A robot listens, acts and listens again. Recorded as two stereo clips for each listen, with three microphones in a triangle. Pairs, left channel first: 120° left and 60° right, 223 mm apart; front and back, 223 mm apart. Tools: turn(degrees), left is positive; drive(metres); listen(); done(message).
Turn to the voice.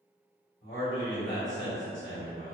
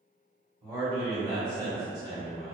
turn(degrees=110)
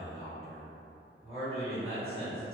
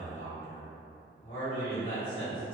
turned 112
done("Facing the man speaking.")